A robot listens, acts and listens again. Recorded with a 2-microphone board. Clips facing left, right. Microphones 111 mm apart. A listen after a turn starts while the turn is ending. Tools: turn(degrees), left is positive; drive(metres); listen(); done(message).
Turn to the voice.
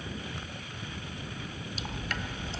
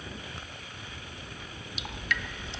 listen()
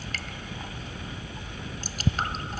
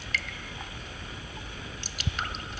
listen()
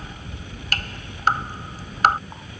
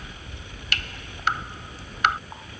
done("I can't make out anyone speaking to turn to.")